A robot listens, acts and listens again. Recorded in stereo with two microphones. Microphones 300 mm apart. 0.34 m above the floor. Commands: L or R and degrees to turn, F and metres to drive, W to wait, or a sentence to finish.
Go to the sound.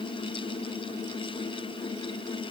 W
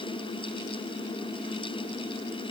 W
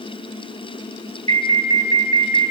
L50
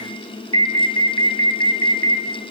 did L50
L65
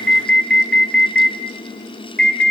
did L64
F1.0
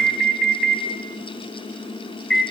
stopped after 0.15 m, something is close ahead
Blocked. The alarm is further on, straight ahead.